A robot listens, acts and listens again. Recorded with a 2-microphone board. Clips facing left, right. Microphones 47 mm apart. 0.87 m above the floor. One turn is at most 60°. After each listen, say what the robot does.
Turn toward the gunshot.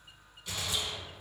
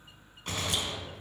Turn 50° right.
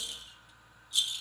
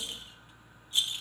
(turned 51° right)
Keep listening.
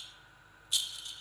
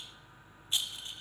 I heard a gunshot, but can't make it out now. It was about straight ahead or 80° right.